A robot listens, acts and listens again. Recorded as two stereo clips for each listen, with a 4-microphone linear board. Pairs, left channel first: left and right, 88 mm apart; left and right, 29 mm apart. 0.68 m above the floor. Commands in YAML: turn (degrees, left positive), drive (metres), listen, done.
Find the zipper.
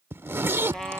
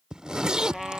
turn: -25
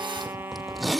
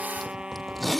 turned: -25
done: "Facing the zipper."